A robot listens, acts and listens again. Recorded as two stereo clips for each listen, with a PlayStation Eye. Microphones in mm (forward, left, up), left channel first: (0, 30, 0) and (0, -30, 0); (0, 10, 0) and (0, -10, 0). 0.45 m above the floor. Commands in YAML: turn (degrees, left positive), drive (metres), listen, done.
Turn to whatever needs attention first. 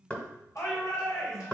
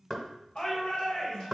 turn: 60
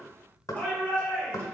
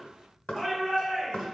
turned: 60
turn: 25
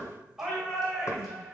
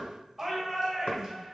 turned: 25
turn: -10
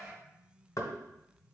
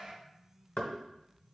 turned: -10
done: "Found it: a shout, straight ahead, 2 to 4 m away."